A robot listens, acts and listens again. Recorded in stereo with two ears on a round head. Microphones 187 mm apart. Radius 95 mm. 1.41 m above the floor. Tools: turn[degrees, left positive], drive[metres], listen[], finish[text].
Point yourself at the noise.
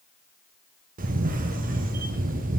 Thought: The camera shutter: about 40° right or 140° right.
Action: turn[-40]
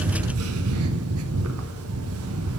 Thought: So it is at 100° right.
Action: turn[-100]
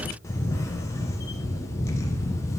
Thought: The camera shutter is now 15° left.
Action: turn[15]
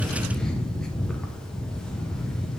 Action: finish[Facing the camera shutter, under 1 m away.]